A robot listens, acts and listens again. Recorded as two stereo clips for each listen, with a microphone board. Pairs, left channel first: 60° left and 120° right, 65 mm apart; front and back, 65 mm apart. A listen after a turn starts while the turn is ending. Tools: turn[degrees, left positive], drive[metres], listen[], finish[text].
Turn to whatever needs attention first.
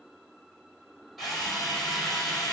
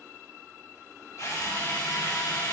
Action: listen[]
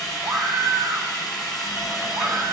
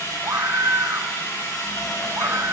Thought: The scream: 150° right.
Action: turn[-150]
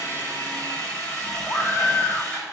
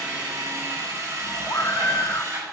Thought: The scream is now 15° left.
Action: turn[15]
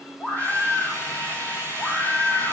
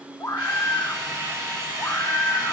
Action: finish[Facing the scream, 2 to 4 m away.]